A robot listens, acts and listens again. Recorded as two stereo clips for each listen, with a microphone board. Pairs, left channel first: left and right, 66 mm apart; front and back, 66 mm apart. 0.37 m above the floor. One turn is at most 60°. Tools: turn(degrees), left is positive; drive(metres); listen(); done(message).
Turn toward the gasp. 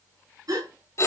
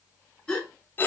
turn(degrees=-60)
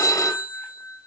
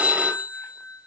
turn(degrees=-15)
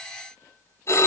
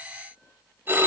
done("I heard a gasp from this way, but can't make it out now.")